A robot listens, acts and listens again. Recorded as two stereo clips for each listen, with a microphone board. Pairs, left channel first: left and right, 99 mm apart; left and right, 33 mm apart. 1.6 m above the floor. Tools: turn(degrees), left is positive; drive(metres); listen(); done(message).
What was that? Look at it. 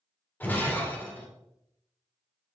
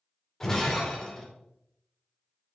turn(degrees=20)
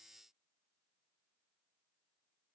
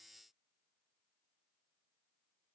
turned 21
listen()
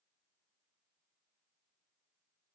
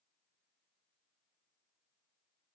done("I heard breaking glass, but can't make it out now. It was about 5° right or 140° left.")